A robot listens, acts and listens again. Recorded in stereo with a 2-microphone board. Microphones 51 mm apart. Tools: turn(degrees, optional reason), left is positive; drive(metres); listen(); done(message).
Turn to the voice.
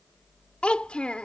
turn(degrees=20, reason="The child speaking: about 20° left or 160° left.")
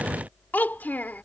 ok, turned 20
turn(degrees=135, reason="So it is at 135° left.")
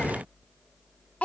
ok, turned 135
turn(degrees=30, reason="The child speaking is now 30° left.")
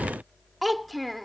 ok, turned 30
done("Facing the child speaking.")